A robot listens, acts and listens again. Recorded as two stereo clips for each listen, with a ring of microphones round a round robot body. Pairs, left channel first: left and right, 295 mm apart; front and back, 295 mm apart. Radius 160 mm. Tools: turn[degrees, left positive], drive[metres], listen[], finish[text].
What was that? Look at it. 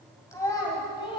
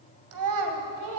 Thought: The child speaking: 160° left.
Action: turn[160]
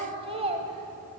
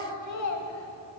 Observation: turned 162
Thought: The child speaking is now 25° right.
Action: turn[-25]
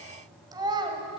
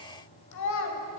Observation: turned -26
Thought: The child speaking is now 20° right.
Action: turn[-20]
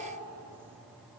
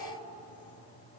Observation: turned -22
Action: listen[]
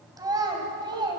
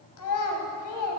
Thought: The child speaking is now 15° right.
Action: turn[-15]
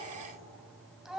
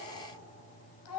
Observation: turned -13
Action: finish[Facing the child speaking, 1 to 2 m away.]